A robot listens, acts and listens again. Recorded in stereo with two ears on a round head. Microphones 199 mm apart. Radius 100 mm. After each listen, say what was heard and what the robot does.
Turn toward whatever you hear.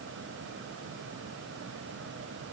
Keep listening.
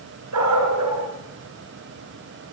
Turn 90° right.
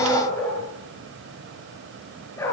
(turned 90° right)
So it is at 10° left. Turn 10° left.
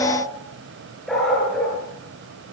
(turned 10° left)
Found it: a dog barking, straight ahead.